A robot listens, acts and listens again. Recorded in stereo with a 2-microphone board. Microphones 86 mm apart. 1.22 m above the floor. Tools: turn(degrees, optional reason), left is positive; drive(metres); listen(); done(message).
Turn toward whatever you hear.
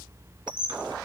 turn(degrees=-60, reason="The squeak: about 60° right or 120° right.")
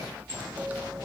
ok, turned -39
turn(degrees=-20, reason="So it is at 20° right.")
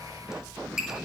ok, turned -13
done("Facing the squeak.")